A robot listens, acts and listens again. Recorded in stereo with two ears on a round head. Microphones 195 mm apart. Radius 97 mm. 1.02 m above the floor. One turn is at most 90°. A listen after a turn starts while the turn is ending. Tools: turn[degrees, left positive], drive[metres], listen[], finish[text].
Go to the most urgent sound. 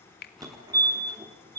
Thought: The fire alarm: about 20° right or 160° right.
Action: turn[-20]
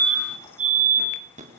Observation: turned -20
Thought: So it is at 140° right.
Action: turn[-90]
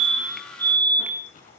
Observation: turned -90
Thought: The fire alarm is now 20° right.
Action: turn[-20]
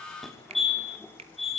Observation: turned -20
Action: drive[1.0]
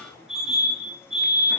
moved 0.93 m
Action: drive[1.0]
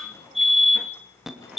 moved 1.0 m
Action: drive[1.0]
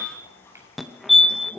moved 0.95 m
Action: drive[1.0]
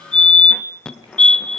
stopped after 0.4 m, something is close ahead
Action: finish[Arrived at the fire alarm, straight ahead.]